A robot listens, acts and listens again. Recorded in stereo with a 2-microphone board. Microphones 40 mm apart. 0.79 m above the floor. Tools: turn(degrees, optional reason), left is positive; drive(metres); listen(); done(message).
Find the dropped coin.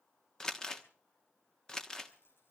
turn(degrees=60, reason="The dropped coin: about 60° left or 120° left.")
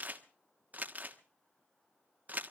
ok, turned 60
listen()
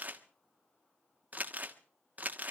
done("I heard a dropped coin, but can't make it out now. It was about straight ahead or 60° left.")